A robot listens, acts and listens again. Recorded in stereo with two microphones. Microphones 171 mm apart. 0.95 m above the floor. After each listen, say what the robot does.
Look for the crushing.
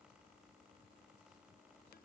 Keep listening.
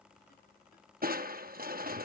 Turn 60° right.
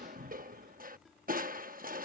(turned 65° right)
Turn 55° right.
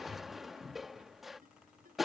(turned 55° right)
Facing the crushing.